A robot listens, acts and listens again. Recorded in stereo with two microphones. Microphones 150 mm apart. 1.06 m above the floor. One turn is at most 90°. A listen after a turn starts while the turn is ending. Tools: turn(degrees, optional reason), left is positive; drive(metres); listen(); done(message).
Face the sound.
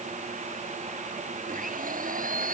turn(degrees=-65, reason="The blender: about 65° right or 115° right.")
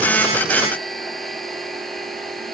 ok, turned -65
done("Found it: a blender, straight ahead.")